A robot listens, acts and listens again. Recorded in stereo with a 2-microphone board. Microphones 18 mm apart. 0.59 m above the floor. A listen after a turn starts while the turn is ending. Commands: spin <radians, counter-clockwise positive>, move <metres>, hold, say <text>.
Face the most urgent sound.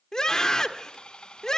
spin 0.70
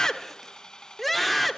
spin 0.17
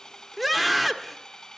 say Facing the scream.